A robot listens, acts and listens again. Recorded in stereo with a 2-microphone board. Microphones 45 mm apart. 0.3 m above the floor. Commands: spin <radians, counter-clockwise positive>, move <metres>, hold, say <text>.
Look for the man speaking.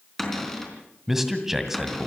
spin -0.52
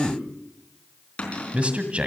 spin -2.44
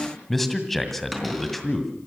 say Facing the man speaking, 1 to 2 m away.